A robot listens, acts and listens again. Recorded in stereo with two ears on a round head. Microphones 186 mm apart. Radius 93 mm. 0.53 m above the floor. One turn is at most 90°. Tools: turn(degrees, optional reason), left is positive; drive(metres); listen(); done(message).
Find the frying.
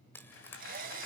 turn(degrees=30)
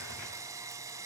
listen()
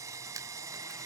listen()
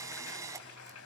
done("I heard frying, but can't make it out now. It was about 20° right or 140° left.")